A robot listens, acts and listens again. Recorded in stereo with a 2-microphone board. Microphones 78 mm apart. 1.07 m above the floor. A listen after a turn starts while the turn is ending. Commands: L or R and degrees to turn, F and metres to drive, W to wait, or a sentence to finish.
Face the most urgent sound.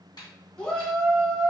L30
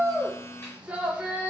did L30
R15
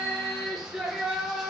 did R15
Found it: a shout, straight ahead, 1 to 2 m away.